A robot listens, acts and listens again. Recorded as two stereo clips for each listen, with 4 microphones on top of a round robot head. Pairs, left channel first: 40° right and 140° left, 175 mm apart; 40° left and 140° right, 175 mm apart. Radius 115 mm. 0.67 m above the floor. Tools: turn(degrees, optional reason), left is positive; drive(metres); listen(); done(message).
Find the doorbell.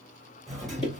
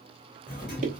turn(degrees=50, reason="The doorbell: 50° left.")
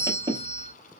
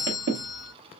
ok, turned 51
done("Found it: a doorbell, straight ahead.")